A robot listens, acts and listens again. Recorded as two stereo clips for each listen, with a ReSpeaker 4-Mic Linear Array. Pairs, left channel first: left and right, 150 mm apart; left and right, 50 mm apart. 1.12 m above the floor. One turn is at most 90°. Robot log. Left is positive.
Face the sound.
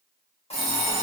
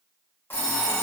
note: The alarm clock: about 45° left or 135° left.
cmd yaw +45
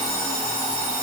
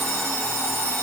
note: So it is at 90° left.
cmd yaw +90
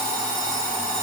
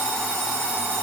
note: The alarm clock is now 35° right.
cmd yaw -35
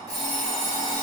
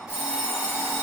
note: The alarm clock is now 25° right.
cmd yaw -25
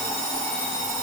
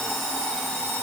end: Facing the alarm clock, under 1 m away.